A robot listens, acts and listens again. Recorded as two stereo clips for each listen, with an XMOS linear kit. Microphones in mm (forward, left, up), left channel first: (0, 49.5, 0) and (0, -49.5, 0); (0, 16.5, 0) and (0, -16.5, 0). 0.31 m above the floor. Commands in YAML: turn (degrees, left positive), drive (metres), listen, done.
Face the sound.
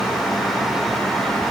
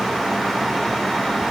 listen: true
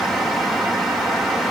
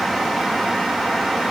listen: true
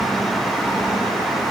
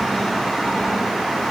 done: "I can't make out anything."